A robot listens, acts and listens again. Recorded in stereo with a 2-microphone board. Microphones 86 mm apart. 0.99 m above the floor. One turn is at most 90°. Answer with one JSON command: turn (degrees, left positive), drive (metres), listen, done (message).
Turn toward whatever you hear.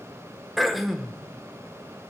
{"turn": 30}
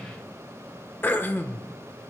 {"turn": 90}
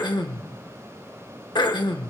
{"turn": 90}
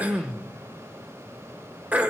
{"turn": -20}
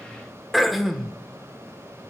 {"done": "Facing the throat clearing, 1 to 2 m away."}